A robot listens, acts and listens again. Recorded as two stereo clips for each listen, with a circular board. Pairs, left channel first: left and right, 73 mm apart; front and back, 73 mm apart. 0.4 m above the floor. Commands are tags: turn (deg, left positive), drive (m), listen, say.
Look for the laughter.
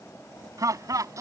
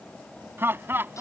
<turn deg="-125"/>
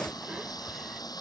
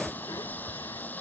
<say>Found it: laughter, straight ahead.</say>